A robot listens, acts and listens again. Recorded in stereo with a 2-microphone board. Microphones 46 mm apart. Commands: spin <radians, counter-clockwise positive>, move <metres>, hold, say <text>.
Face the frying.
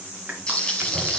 spin 0.52
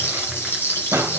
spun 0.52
spin 2.36
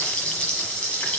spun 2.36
spin 0.44
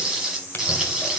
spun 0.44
say Found it: frying, straight ahead.